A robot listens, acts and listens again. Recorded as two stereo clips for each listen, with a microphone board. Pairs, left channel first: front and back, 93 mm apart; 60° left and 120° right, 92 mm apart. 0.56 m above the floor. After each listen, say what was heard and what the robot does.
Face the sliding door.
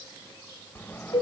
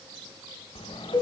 The sliding door: 70° left. Turn 70° left.
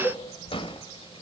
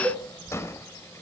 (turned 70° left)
Found it: a sliding door, straight ahead.